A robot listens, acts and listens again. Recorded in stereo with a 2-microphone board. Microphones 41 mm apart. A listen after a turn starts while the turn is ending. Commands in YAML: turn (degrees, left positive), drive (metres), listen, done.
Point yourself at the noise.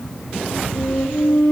turn: 55
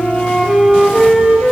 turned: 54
done: "Found it: a flute, straight ahead, 2 to 4 m away."